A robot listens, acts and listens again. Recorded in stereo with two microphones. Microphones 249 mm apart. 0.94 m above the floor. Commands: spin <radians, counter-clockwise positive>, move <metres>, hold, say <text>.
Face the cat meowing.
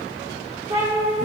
spin -0.44
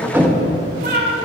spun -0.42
spin -0.79
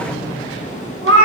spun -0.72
spin -2.09
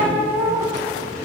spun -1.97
spin -0.26
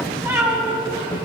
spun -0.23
spin -0.17
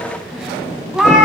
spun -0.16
say Found it: a cat meowing, straight ahead, 1 to 2 m away.